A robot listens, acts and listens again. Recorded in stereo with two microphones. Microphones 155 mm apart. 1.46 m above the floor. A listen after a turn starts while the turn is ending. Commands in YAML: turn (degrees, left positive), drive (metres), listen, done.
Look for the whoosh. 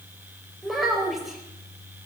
listen: true
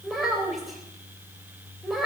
listen: true
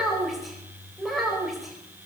done: "I can't make out a whoosh, only a child speaking."